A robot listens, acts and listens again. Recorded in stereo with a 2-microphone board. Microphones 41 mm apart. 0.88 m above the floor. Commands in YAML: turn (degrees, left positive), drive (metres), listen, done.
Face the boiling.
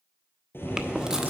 turn: 65
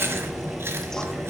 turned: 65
done: "Found it: boiling, straight ahead, 2 to 4 m away."